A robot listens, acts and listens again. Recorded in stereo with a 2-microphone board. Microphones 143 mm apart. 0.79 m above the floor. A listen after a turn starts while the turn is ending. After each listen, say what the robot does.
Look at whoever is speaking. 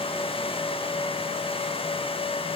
Keep listening.
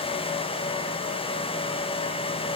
Keep listening.
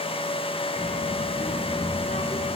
Turn 60° left.
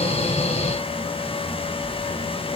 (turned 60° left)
Turn 60° left.
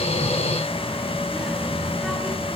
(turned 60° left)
Found it: a child speaking, straight ahead, over 4 m away.